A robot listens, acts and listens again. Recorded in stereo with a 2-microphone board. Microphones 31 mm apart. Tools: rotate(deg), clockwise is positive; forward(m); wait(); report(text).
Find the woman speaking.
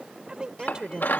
rotate(25)
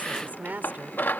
rotate(125)
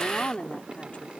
rotate(-35)
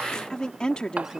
rotate(-25)
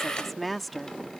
report("Facing the woman speaking.")